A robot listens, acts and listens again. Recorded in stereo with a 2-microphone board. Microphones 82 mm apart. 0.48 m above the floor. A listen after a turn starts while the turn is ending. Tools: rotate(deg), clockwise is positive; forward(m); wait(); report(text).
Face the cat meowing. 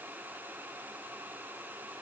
wait()
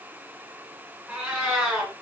rotate(30)
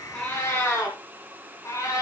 rotate(-35)
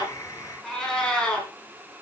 rotate(-10)
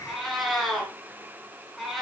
report("Facing the cat meowing, 2 to 4 m away.")